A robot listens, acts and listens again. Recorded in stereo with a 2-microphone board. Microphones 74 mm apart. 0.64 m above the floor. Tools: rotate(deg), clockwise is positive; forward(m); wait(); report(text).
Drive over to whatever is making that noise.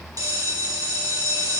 rotate(60)
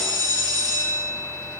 rotate(60)
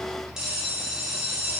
rotate(10)
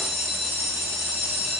forward(1.0)
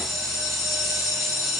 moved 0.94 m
forward(1.0)
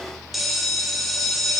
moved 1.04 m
forward(1.0)
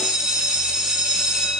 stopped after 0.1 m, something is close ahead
rotate(10)
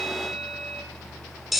report("Arrived at the bell, straight ahead.")